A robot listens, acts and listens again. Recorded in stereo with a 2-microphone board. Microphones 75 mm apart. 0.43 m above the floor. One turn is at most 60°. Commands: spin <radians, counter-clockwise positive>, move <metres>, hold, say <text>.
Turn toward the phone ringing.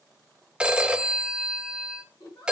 spin -0.52
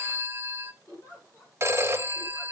spin -1.05
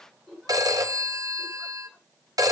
spin -1.05
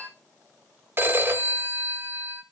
spin -0.61
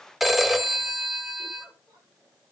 say Found it: a phone ringing, straight ahead, 1 to 2 m away.